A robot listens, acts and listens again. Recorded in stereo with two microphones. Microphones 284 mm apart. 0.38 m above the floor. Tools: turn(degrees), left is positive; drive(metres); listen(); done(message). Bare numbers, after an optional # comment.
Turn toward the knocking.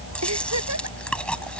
listen()
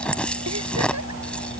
listen()
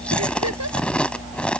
done("I can't make out knocking to turn to.")